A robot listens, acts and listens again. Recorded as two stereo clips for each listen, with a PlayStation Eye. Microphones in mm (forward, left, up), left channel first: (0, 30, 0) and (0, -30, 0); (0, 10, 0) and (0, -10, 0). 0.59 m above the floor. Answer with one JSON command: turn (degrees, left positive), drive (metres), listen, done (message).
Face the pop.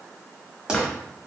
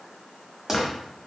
{"turn": -30}
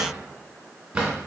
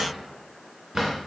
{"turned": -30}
{"listen": true}
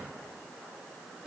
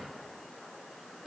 {"done": "I heard a pop, but can't make it out now. It was about 15° left or 135° right."}